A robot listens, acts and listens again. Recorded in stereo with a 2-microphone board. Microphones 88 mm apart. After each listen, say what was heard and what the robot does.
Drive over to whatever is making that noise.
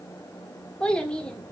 Turn 30° left.
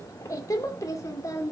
So it is at 140° left. Turn 140° left.
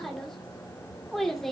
Drive 1.0 m forward.
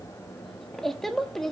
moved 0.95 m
Drive 1.0 m forward.
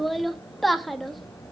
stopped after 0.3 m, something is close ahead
I am next to the child speaking.